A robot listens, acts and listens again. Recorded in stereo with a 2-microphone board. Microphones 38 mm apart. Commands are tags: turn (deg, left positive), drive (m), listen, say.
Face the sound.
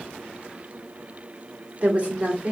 <turn deg="-30"/>
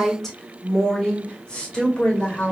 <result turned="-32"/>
<turn deg="30"/>
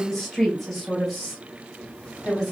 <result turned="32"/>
<turn deg="10"/>
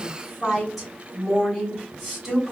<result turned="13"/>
<say>Facing the woman speaking, 2 to 4 m away.</say>